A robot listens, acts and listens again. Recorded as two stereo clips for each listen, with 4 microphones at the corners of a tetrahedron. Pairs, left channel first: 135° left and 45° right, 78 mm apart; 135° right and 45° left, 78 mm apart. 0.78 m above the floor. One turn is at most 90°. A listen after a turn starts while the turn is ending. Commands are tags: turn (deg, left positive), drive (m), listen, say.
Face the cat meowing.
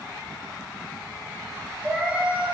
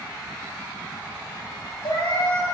<turn deg="-90"/>
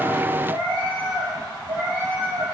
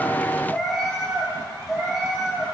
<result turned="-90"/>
<turn deg="-45"/>
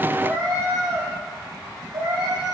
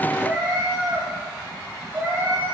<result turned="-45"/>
<turn deg="-15"/>
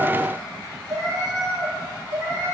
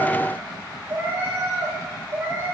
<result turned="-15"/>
<say>Facing the cat meowing.</say>